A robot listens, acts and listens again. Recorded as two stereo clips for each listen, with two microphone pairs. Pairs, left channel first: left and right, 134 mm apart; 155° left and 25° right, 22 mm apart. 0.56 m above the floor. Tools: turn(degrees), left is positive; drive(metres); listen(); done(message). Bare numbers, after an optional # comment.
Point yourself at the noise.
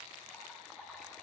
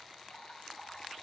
# The dripping: 175° right.
turn(-175)
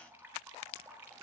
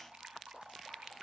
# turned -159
# The dripping is now 15° right.
turn(-15)
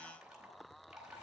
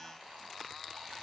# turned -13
listen()
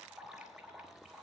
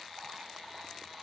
listen()
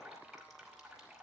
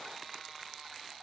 done("I heard dripping from this way, but can't make it out now.")